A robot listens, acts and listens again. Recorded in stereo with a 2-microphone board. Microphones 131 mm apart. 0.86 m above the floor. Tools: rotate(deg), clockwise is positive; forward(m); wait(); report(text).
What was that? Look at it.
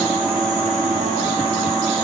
wait()
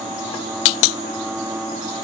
wait()
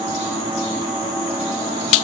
report("I can't make out anything.")